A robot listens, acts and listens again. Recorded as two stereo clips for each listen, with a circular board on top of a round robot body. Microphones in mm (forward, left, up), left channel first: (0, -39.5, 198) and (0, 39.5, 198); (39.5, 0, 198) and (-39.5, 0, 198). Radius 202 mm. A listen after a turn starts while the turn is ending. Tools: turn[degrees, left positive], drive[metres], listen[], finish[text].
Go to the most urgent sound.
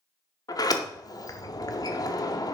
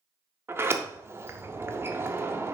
Action: listen[]
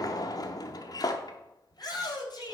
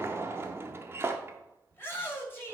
Thought: The shout: 60° right.
Action: turn[-60]
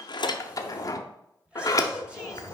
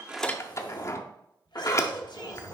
Action: listen[]
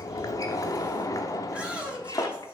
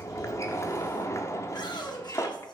Thought: The shout is now 15° left.
Action: turn[15]
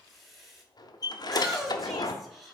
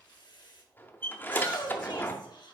Action: drive[1.0]
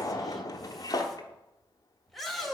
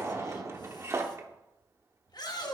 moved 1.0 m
Action: drive[1.0]
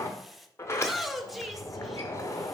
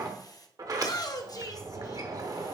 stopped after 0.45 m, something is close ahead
Action: finish[I am next to the shout.]